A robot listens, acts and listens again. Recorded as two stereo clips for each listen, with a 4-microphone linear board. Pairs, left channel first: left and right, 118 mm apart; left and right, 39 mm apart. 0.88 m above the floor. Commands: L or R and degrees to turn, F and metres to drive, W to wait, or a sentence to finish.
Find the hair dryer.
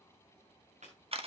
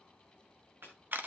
W
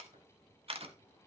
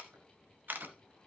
W
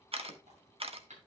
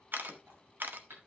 I can't make out a hair dryer to turn to.